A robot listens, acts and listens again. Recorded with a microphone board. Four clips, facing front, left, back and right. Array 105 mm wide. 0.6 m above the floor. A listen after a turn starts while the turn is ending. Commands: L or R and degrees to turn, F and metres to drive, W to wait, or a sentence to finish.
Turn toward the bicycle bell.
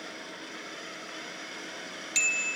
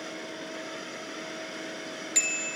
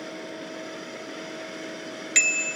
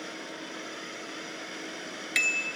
R150
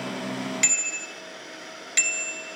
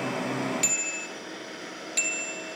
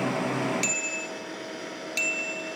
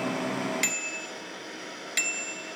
R35
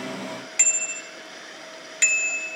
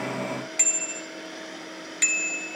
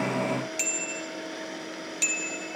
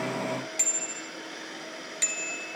L20
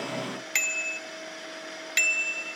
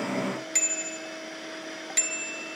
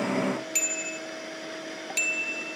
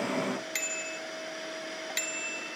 Facing the bicycle bell, 2 to 4 m away.